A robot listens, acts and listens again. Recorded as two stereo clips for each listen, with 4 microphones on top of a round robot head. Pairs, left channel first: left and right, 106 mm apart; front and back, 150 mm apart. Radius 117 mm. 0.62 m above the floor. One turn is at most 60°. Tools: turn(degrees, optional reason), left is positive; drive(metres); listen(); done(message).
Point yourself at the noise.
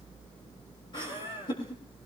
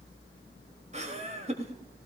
turn(degrees=60, reason="The laughter: 140° left.")
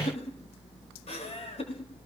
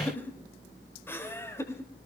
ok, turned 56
turn(degrees=60, reason="The laughter is now 70° left.")
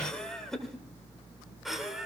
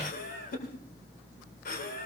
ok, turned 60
done("Found it: laughter, straight ahead.")